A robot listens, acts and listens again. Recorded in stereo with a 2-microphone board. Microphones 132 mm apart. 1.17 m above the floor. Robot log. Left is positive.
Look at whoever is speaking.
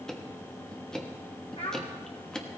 note: The child speaking: about 55° left or 125° left.
cmd yaw +55
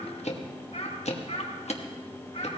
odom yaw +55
note: So it is at 50° left.
cmd yaw +50
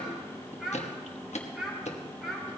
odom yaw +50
end: Found it: a child speaking, straight ahead, over 4 m away.